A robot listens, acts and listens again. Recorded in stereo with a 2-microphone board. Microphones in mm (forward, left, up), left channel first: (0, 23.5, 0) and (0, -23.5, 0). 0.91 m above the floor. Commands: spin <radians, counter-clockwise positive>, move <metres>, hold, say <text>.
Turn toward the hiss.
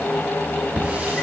spin -0.52
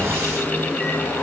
spin -2.09
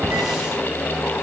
spin -0.17
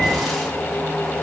hold
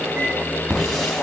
say Facing the hiss, 2 to 4 m away.